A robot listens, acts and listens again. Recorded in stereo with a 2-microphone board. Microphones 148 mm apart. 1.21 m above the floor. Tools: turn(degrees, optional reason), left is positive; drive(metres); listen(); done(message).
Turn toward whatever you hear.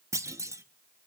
turn(degrees=-20, reason="The clunk: about 20° right or 160° right.")
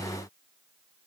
listen()
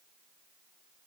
done("I heard a clunk, but can't make it out now. It was about straight ahead or 140° right.")